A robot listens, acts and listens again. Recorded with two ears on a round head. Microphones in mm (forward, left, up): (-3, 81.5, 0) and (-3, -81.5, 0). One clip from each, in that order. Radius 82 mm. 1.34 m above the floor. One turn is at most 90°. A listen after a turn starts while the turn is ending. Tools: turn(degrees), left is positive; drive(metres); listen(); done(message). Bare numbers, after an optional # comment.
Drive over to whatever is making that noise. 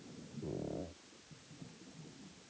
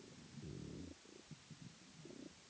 listen()
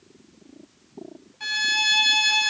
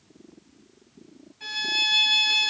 # The violin: about 25° left or 155° left.
turn(25)
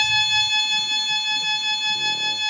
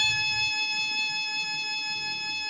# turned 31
# So it is at 115° left.
turn(90)
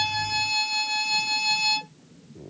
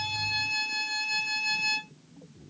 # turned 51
# The violin is now 65° left.
turn(65)
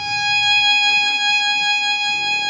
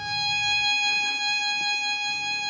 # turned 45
# The violin is now 20° left.
turn(20)
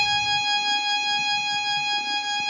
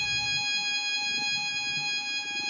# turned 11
drive(1.0)
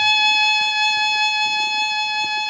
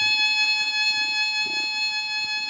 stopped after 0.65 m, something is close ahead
done("I am next to the violin.")